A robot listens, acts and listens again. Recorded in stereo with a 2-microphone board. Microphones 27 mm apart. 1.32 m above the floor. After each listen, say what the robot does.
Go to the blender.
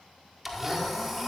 Turn 30° right.
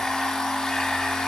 Turn 25° left.
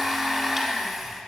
Drive 1.0 m forward.
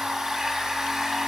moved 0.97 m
Turn 15° right.
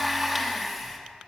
Drive 1.0 m forward.
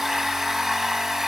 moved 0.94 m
Turn 10° right.
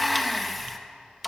Drive 1.0 m forward.
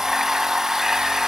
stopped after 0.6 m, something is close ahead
Turn 15° right.
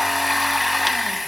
I am next to the blender.